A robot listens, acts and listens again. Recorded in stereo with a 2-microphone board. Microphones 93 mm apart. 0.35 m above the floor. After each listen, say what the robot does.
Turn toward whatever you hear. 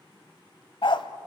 Turn 60° left.
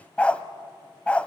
Turn 15° left.
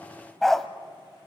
Found it: a dog barking, straight ahead, under 1 m away.